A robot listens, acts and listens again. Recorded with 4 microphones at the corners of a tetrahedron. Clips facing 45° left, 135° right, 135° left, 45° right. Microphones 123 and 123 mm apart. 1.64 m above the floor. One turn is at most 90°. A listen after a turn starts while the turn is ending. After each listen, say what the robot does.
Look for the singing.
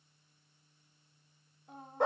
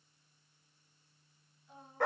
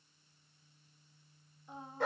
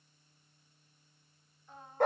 Turn 65° left.
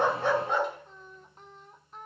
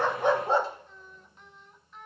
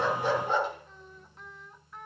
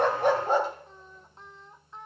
Turn 15° left.
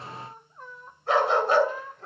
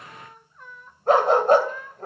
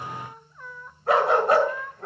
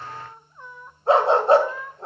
Turn 40° left.
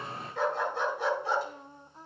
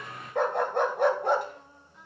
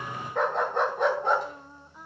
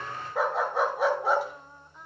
Turn 50° left.
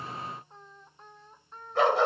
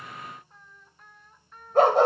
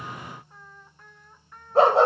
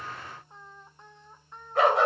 Facing the singing, 1 to 2 m away.